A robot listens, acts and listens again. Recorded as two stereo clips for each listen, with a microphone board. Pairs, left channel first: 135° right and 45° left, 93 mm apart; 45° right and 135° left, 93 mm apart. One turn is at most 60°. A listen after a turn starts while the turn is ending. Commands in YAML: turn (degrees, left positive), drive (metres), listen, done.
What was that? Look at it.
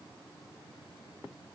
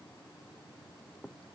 listen: true
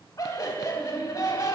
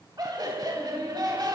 turn: 60
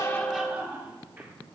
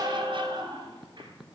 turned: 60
turn: 60
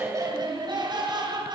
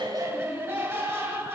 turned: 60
turn: 60
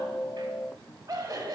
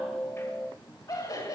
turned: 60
done: "Found it: laughter, straight ahead."